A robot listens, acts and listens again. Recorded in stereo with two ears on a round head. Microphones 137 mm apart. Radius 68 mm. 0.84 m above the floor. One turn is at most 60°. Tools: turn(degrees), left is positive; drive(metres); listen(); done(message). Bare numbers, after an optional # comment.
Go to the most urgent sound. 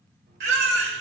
turn(-60)
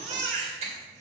# So it is at 45° right.
turn(-45)
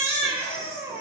# The baby crying is now 15° right.
turn(-15)
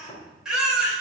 drive(1.0)
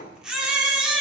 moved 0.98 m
drive(1.0)
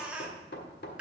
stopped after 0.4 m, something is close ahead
done("Arrived at the baby crying, straight ahead.")